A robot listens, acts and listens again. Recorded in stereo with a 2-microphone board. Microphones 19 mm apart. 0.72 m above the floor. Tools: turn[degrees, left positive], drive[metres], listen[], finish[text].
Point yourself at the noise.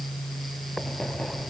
Thought: The writing: about 20° left or 160° left.
Action: turn[20]
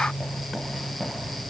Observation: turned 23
Action: finish[Found it: writing, straight ahead.]